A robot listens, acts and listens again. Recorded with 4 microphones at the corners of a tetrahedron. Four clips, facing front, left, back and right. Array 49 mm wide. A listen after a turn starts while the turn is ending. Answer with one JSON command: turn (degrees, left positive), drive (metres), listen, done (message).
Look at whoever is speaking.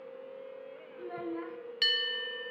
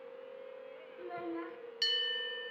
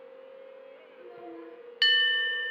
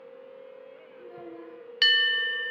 {"turn": 45}
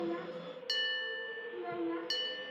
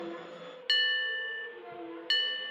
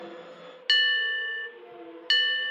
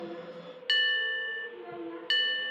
{"turn": -10}
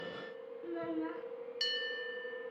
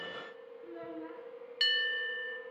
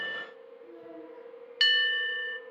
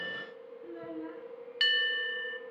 {"done": "Found it: a child speaking, straight ahead, 2 to 4 m away."}